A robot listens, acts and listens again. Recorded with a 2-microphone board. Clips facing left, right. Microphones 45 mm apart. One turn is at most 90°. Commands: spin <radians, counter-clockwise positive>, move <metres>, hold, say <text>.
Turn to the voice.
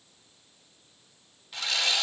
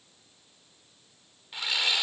hold
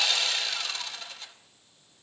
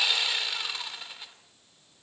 hold
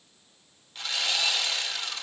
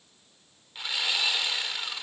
say I can't make out anyone speaking to turn to.